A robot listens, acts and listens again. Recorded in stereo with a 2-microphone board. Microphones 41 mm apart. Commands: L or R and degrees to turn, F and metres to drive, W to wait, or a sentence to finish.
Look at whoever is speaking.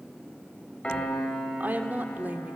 R45
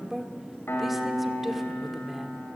Facing the woman speaking, 1 to 2 m away.